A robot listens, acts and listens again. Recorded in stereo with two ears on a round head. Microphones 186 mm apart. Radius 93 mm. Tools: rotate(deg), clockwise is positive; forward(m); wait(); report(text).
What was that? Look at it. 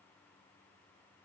wait()
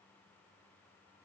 wait()
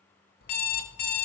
rotate(-50)
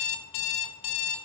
rotate(-75)
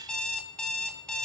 report("Found it: an alarm clock, straight ahead.")